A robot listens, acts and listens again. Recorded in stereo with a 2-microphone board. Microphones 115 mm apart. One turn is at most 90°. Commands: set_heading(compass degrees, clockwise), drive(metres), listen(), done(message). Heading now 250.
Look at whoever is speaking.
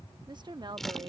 set_heading(290)
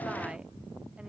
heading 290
listen()
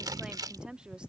set_heading(300)
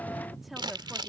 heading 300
done("Found it: a woman speaking, straight ahead.")